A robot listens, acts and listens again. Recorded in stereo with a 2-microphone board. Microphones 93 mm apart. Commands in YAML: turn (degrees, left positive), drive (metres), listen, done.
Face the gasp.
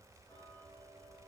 listen: true
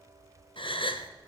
turn: 65
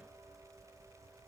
listen: true
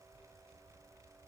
done: "I heard a gasp, but can't make it out now. It was about straight ahead or 50° left."